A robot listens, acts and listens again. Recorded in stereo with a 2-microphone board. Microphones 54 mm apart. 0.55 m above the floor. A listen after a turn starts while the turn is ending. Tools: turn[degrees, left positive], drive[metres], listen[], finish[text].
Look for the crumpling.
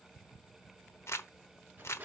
Thought: The crumpling: about 55° left or 125° left.
Action: turn[55]
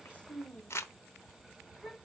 Thought: So it is at 60° left.
Action: turn[60]
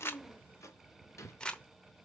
Thought: The crumpling is now 20° left.
Action: turn[20]
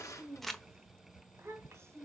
Action: finish[Facing the crumpling, under 1 m away.]